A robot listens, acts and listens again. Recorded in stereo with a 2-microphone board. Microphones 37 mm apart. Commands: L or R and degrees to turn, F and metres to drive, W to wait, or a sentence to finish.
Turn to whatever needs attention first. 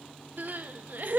R60
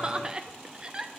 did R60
R35
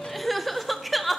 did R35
Facing the crying, under 1 m away.